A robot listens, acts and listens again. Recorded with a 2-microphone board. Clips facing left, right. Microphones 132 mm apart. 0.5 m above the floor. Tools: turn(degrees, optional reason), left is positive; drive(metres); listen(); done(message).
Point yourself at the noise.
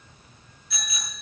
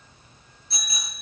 turn(degrees=-35, reason="The bicycle bell: about 35° right or 145° right.")
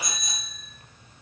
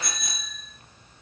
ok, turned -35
turn(degrees=-110, reason="So it is at 110° right.")
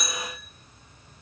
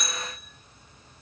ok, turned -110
done("Facing the bicycle bell, over 4 m away.")